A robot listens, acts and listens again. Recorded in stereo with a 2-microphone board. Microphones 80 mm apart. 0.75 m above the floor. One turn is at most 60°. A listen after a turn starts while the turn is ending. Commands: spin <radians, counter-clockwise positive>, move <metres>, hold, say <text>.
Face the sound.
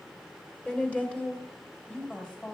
spin 0.52
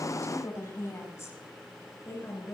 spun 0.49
spin 1.05
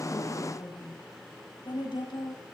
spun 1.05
spin 1.05
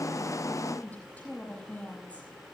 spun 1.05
spin 0.26
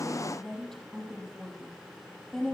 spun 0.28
say Found it: a woman speaking, straight ahead.